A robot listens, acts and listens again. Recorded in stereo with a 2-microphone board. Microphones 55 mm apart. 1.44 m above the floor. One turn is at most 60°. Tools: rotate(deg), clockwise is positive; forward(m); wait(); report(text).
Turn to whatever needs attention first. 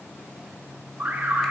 rotate(40)
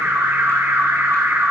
rotate(60)
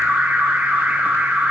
rotate(35)
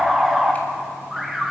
report("Found it: an alarm, straight ahead, 1 to 2 m away.")